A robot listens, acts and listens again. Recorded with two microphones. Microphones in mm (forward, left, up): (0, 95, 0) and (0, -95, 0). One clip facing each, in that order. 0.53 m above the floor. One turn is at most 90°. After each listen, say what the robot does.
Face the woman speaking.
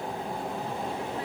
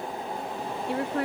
Turn 70° right.
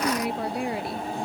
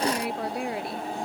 Found it: a woman speaking, straight ahead.